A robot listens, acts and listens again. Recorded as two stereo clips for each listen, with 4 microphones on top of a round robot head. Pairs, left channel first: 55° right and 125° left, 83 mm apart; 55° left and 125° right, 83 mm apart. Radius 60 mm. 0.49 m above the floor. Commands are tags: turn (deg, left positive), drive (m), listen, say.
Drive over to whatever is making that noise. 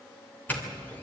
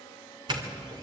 <turn deg="-120"/>
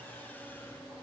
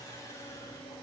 <listen/>
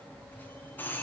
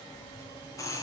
<turn deg="10"/>
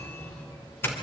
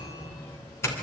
<drive m="1.0"/>
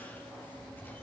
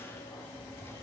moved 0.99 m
<drive m="1.0"/>
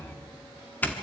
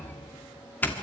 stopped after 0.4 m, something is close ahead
<say>Arrived at the doorbell, straight ahead.</say>